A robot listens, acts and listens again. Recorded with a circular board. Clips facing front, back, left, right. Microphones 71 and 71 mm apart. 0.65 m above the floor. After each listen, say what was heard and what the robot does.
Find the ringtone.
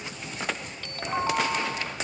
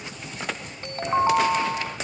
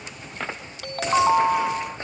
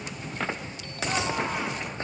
The ringtone: 120° left. Turn 120° left.
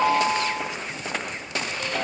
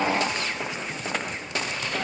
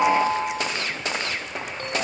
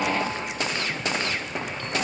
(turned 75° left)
The ringtone is now 45° left. Turn 45° left.
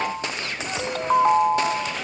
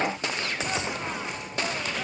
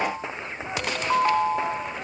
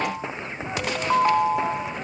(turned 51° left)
Facing the ringtone.